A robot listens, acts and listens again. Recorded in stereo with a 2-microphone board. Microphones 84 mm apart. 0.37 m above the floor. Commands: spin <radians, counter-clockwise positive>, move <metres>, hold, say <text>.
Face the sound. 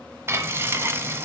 spin -0.52
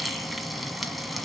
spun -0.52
say Facing the frying, 1 to 2 m away.